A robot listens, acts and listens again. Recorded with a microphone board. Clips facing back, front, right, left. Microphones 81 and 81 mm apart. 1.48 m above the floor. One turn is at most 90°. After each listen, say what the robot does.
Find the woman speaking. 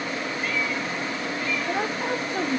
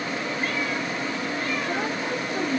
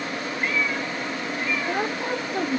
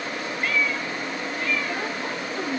Turn 90° right.
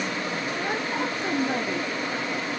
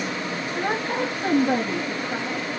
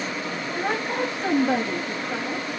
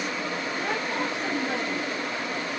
Turn 35° right.
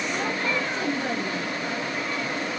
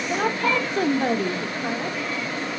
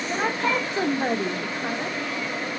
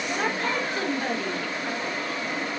Turn 25° right.
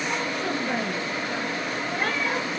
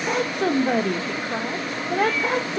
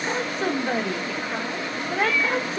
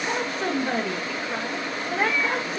Found it: a woman speaking, straight ahead, 1 to 2 m away.